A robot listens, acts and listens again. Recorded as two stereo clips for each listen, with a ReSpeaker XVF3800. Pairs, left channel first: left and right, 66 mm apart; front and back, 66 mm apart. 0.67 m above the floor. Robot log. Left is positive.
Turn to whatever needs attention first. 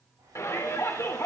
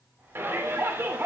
note: The shout: 130° left.
cmd yaw +130
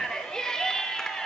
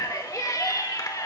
note: The shout is now 10° left.
cmd yaw +10
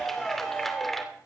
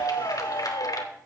end: Found it: a shout, straight ahead.